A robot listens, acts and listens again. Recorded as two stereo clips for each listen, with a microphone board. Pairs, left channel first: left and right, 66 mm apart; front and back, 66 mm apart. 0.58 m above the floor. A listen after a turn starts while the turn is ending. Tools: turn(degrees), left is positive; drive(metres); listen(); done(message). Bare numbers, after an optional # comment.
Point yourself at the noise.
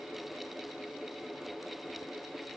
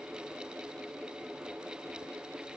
listen()
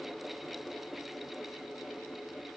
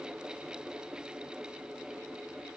listen()
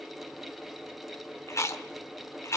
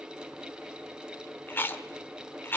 # The chewing: 55° left.
turn(55)
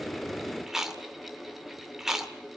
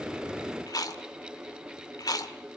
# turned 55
done("Facing the chewing, 1 to 2 m away.")